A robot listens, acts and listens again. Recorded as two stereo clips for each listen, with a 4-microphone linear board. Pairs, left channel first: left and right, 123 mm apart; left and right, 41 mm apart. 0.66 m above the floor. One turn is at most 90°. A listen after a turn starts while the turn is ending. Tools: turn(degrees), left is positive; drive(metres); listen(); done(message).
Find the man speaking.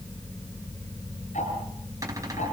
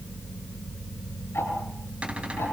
listen()
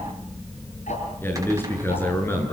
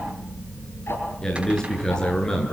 turn(degrees=15)
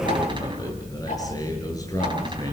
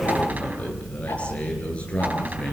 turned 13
turn(degrees=30)
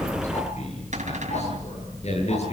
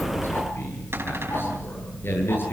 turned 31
turn(degrees=90)
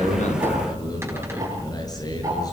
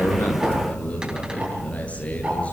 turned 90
turn(degrees=30)
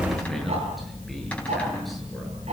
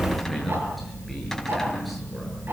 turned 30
done("Facing the man speaking.")